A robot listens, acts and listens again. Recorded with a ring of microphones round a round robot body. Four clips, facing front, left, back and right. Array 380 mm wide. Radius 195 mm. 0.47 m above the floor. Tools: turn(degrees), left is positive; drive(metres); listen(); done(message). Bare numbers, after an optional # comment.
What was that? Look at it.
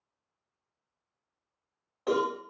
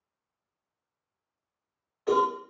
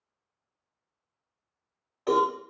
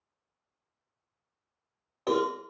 # The cowbell: 85° right.
turn(-85)
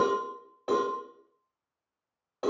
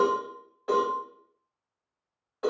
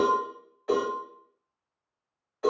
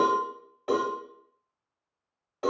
# The cowbell is now 25° right.
turn(-25)
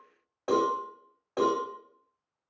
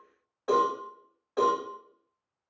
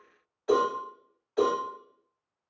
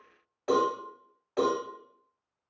# The cowbell is now 15° right.
turn(-15)
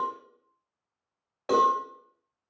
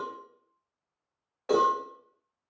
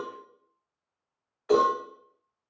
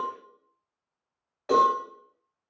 done("Facing the cowbell.")